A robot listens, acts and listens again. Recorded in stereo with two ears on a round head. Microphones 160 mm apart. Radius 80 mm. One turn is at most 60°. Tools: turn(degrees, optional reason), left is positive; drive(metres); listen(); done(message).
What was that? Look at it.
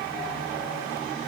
listen()
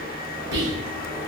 turn(degrees=-60, reason="The whispering: about 65° right or 115° right.")
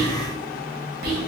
turn(degrees=-55, reason="So it is at 55° right.")
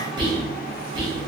turn(degrees=-25, reason="The whispering is now 25° right.")
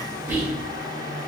turn(degrees=-10, reason="The whispering is now 10° right.")
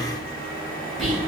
done("Facing the whispering, 1 to 2 m away.")